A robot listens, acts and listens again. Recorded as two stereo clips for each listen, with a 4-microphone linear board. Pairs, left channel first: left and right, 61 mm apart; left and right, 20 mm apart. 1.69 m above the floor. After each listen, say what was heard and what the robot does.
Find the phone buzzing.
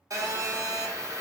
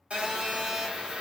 The phone buzzing: about 65° right or 115° right. Turn 65° right.
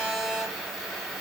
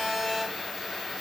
Found it: a phone buzzing, straight ahead.